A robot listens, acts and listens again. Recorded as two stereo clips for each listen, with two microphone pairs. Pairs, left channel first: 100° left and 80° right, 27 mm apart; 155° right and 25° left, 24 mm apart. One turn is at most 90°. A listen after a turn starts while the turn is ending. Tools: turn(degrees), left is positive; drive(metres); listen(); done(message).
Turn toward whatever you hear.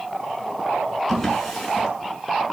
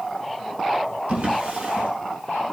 turn(degrees=15)
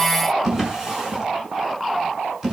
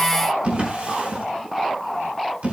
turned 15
done("Facing the drawer, over 4 m away.")